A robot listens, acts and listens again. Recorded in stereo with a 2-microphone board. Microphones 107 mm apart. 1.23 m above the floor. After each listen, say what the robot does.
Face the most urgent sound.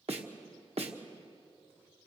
Keep listening.
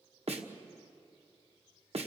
Keep listening.
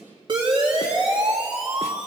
Turn 50° right.
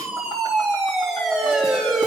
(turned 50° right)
Found it: a siren, straight ahead.